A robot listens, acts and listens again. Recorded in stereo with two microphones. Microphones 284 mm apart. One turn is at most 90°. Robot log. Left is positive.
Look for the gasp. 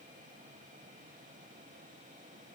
cmd idle
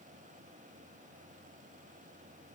cmd idle
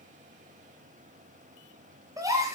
cmd yaw -30
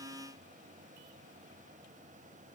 cmd idle
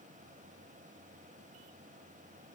end: I heard a gasp, but can't make it out now. It was about 20° left or 140° right.